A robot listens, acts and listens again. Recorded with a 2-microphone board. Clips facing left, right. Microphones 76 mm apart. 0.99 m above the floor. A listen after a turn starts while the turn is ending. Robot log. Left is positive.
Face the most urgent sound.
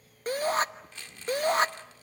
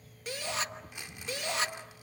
note: The shout: about 40° left or 140° left.
cmd yaw +40
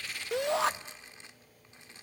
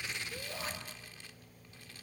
note: So it is at 95° left.
cmd yaw +95
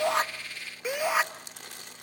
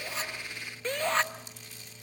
note: The shout is now 10° left.
cmd yaw +10
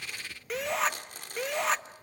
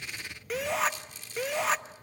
end: Found it: a shout, straight ahead.